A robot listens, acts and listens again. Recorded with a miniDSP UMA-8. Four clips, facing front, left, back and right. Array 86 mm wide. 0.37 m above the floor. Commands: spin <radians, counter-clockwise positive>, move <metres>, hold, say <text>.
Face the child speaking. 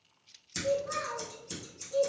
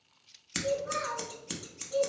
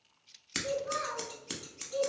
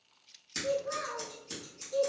spin 1.66
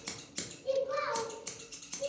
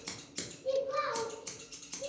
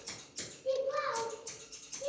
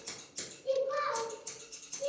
spin -0.26
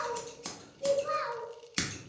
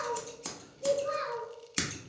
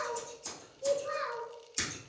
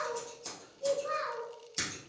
say Found it: a child speaking, straight ahead.